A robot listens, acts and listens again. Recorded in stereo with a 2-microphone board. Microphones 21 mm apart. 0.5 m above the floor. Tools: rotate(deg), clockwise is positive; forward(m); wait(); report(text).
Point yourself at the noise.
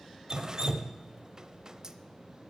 rotate(35)
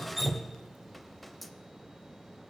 report("Found it: dripping, straight ahead.")